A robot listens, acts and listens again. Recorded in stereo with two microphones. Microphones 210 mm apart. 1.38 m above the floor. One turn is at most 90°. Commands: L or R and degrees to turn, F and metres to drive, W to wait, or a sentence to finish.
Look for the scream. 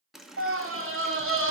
R90
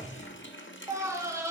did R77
R15
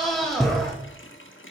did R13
Facing the scream.